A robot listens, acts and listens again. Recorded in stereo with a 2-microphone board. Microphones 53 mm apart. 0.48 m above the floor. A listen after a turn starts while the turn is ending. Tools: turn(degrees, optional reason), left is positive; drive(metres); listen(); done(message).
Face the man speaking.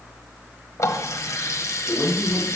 turn(degrees=30, reason="The man speaking: about 30° left or 150° left.")
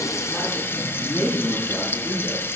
done("Found it: a man speaking, straight ahead, over 4 m away.")